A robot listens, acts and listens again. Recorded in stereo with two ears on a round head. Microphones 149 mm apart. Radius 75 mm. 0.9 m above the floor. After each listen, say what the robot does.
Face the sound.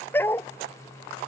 Turn 30° left.
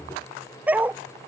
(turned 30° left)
Turn 10° right.
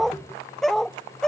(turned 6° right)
Facing the dog barking.